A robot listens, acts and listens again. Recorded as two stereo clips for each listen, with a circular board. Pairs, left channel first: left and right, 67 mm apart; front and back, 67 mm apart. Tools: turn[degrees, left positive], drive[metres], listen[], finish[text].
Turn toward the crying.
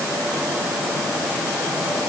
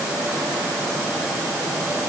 Action: listen[]
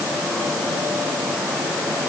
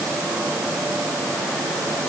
Action: listen[]
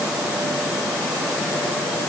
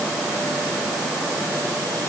Action: finish[I can't make out crying to turn to.]